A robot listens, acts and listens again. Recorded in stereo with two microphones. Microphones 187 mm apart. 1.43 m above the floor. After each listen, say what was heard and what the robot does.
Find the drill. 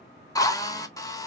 The drill: about 15° left or 165° left. Turn 15° left.
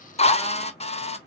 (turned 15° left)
So it is at 150° left. Turn 150° left.
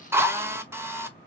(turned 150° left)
The drill is now 15° right. Turn 15° right.
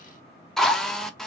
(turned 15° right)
Facing the drill.